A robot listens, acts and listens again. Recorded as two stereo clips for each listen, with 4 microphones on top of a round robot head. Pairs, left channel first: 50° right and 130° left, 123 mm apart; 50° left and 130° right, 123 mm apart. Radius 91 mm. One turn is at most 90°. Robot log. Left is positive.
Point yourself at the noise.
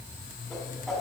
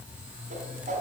note: The whoosh: 140° right.
cmd yaw -90
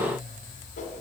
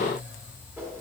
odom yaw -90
note: Nothing new. It was at 50° right.
cmd yaw -50
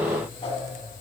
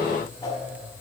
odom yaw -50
note: The whoosh is now 10° right.
cmd yaw -10
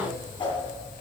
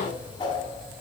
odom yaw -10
end: Found it: a whoosh, straight ahead.